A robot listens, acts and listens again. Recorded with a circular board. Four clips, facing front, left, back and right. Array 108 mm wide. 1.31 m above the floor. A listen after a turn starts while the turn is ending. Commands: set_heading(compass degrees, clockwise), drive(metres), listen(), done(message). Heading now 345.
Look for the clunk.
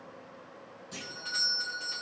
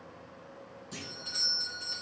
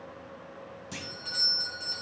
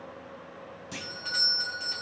set_heading(110)
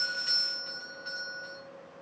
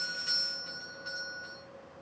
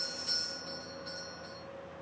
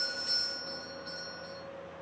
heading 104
done("I heard a clunk from this way, but can't make it out now.")